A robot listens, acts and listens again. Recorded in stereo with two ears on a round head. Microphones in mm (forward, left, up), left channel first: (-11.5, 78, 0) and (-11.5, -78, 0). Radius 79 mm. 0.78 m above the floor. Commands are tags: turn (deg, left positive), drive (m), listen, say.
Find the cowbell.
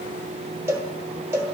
<turn deg="-15"/>
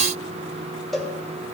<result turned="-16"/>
<say>Found it: a cowbell, straight ahead, 1 to 2 m away.</say>